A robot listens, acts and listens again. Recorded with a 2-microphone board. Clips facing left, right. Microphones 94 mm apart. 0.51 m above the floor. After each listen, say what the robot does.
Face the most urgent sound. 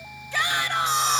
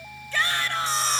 Turn 15° left.
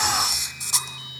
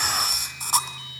Keep listening.
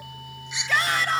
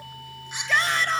Found it: a shout, straight ahead.